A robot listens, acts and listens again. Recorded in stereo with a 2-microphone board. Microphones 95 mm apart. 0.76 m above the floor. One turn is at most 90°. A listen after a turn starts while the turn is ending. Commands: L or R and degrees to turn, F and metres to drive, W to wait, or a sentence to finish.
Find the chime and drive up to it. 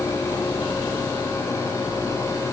W
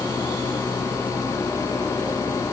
W
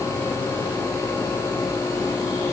I can't make out a chime.